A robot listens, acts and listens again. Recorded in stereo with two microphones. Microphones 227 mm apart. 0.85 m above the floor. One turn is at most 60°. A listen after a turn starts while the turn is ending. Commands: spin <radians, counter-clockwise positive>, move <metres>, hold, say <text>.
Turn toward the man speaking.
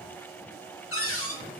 hold
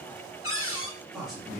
spin 0.52
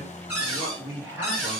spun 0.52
spin -0.52
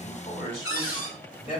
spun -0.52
spin 0.61
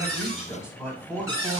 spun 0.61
say Facing the man speaking, 2 to 4 m away.